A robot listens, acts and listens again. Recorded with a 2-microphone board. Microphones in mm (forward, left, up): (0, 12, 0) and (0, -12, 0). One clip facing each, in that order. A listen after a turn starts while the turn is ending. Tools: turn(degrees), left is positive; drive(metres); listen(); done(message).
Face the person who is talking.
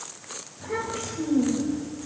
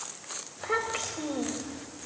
turn(degrees=-70)
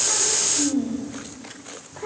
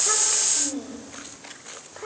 turn(degrees=-25)
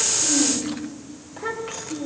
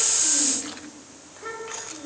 turn(degrees=15)
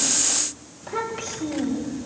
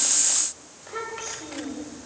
done("Found it: a child speaking, straight ahead, over 4 m away.")